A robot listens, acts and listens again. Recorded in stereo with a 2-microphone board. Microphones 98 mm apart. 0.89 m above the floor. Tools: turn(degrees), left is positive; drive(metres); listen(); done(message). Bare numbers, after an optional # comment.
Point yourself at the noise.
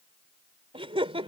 turn(-90)
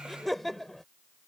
done("Found it: laughter, straight ahead.")